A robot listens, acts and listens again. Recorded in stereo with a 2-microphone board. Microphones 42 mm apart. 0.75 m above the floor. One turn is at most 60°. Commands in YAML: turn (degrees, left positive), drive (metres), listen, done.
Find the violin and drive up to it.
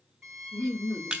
turn: -20
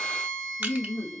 drive: 1.0
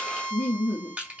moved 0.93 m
drive: 1.0
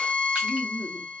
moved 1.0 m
drive: 1.0
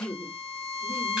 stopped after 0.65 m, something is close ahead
done: "I am next to the violin."